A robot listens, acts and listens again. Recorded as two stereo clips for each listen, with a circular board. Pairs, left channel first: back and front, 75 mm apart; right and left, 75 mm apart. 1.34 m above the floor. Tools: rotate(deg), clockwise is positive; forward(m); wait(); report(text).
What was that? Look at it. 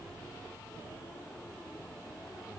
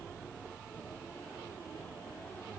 wait()
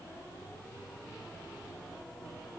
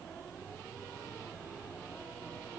wait()
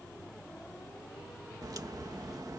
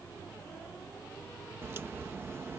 rotate(-35)
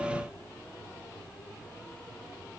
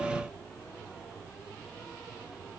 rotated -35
report("Facing where the crack came from. I can't hear it now.")